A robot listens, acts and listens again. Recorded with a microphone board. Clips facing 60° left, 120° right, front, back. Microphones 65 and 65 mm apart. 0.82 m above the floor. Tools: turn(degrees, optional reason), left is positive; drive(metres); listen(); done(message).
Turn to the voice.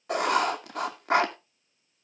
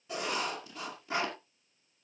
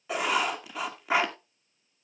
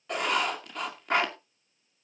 listen()
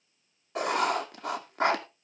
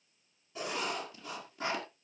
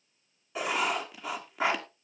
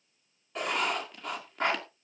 listen()
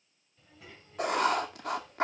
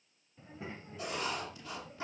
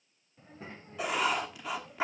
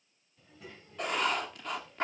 turn(degrees=-60, reason="The child speaking: 60° right.")
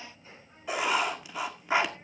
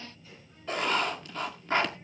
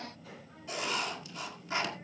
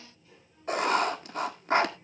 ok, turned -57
done("Found it: a child speaking, straight ahead.")